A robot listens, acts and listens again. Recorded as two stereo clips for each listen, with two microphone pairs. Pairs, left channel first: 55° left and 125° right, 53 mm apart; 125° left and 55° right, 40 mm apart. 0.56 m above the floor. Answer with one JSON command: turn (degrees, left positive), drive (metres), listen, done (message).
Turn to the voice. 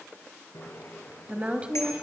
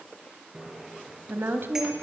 {"turn": -55}
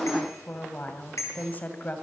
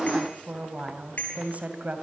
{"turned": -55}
{"done": "Found it: a woman speaking, straight ahead."}